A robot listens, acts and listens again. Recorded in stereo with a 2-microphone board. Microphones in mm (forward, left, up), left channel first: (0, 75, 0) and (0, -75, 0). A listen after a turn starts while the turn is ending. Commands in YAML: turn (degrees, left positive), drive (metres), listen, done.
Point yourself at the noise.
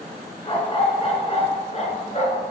turn: 45
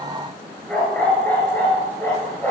turn: 15
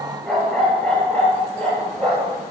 done: "Facing the dog barking."